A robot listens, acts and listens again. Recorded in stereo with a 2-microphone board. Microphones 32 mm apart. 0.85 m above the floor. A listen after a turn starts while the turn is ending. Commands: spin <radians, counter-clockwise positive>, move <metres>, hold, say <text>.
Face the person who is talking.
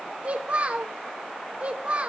spin -0.70
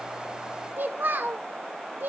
spin -1.66
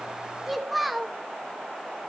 say Found it: a child speaking, straight ahead, 1 to 2 m away.